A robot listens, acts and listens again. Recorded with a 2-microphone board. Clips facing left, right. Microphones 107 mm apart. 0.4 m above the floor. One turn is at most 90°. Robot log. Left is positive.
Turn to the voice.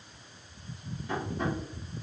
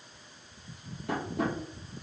cmd idle
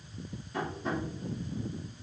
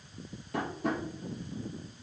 cmd idle
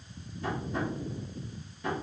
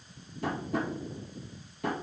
end: I can't make out anyone speaking to turn to.